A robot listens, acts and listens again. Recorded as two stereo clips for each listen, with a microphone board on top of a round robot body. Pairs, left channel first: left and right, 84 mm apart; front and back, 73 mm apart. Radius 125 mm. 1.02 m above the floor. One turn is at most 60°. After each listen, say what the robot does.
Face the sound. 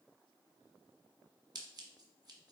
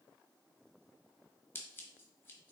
Turn 55° right.
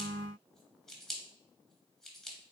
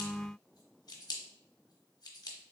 Found it: scissors, straight ahead.